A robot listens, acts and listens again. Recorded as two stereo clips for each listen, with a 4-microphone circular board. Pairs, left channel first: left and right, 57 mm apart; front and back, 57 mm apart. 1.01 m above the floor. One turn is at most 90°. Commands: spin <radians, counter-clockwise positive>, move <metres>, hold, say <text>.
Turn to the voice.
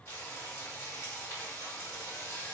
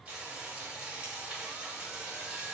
hold
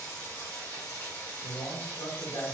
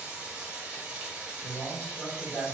spin 1.40
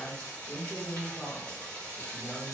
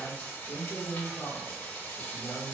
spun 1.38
say Facing the man speaking.